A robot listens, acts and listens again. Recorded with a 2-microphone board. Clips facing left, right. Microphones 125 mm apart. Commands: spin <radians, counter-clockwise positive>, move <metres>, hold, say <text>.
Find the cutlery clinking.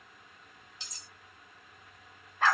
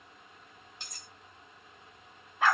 spin -0.96
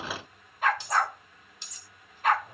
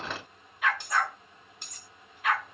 spin -1.05
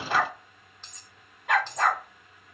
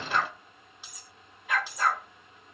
spin -0.17
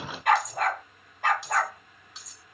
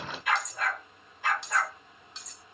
say Found it: cutlery clinking, straight ahead.